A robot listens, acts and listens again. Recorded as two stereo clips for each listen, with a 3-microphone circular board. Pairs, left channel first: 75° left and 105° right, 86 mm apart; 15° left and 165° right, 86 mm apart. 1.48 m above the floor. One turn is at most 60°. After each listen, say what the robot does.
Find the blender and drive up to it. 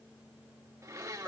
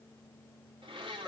Turn 60° right.
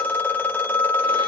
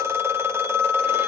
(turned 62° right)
Turn 60° right.
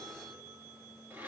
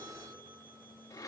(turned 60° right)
Turn 40° right.
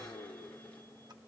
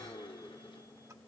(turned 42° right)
Drive 1.0 m forward.
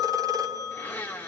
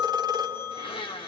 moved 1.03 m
Drive 1.0 m forward.
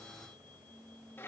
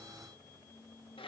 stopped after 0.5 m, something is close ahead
Turn 10° left.
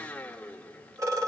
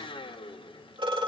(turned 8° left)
I am next to the blender.